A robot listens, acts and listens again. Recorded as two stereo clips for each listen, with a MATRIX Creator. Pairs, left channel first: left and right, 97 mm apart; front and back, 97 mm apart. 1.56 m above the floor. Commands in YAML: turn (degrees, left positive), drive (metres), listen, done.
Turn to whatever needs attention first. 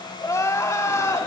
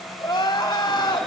turn: 40
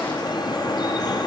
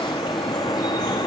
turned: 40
listen: true
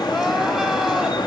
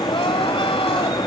listen: true
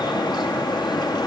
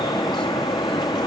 done: "Facing where the crying came from. I can't hear it now."